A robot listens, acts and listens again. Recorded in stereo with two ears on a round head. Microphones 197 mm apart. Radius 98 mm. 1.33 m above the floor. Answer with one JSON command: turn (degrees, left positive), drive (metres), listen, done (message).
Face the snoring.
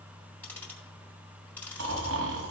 {"turn": -70}
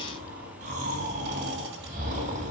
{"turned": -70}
{"turn": -35}
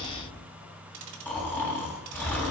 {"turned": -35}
{"turn": 10}
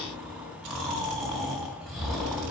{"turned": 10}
{"done": "Found it: snoring, straight ahead, 2 to 4 m away."}